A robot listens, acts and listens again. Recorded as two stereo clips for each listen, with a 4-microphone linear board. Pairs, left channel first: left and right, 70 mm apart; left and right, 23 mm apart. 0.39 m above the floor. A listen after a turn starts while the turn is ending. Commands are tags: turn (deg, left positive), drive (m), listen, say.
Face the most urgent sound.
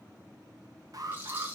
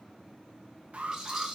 <turn deg="-55"/>
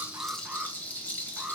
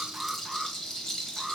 <turn deg="-15"/>
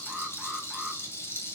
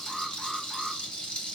<say>Facing the alarm, 1 to 2 m away.</say>